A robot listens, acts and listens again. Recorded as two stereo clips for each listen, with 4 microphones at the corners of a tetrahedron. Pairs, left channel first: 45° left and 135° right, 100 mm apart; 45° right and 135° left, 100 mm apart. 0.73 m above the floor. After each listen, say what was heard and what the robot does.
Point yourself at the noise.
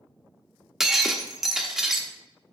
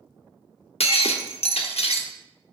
The breaking glass: 50° right. Turn 50° right.
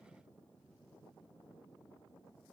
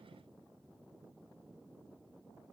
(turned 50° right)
Facing where the breaking glass came from. I can't hear it now.